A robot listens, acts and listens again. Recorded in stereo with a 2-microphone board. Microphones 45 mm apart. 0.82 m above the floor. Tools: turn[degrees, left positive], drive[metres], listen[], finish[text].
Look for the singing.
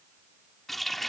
Action: listen[]
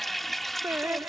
Thought: The singing: about 65° right or 115° right.
Action: turn[-65]
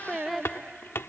Action: finish[Found it: singing, straight ahead.]